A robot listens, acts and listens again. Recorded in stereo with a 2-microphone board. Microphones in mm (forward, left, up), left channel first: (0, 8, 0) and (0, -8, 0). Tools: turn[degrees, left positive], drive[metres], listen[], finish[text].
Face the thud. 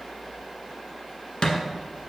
Thought: The thud: about 55° left or 125° left.
Action: turn[55]
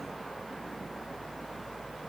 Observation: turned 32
Action: listen[]
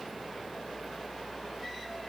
Action: finish[I heard a thud, but can't make it out now. It was about 25° left or 95° left.]